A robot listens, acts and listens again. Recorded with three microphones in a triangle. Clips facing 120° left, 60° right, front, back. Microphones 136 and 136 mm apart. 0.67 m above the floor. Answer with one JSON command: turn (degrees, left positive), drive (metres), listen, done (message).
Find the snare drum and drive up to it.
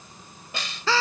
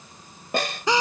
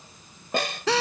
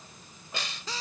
{"turn": -25}
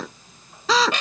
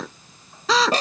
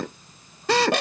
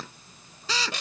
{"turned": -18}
{"turn": -10}
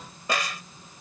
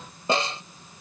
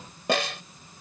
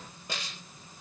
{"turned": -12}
{"drive": 1.0}
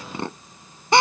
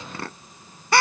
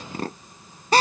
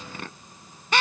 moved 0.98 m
{"listen": true}
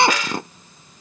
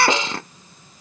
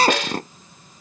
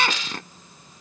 {"drive": 1.0}
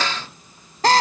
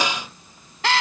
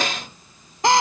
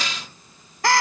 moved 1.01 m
{"turn": 15}
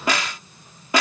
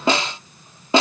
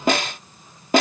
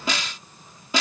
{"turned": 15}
{"drive": 1.0}
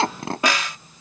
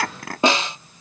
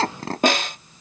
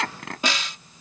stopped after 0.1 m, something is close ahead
{"done": "I am next to the snare drum."}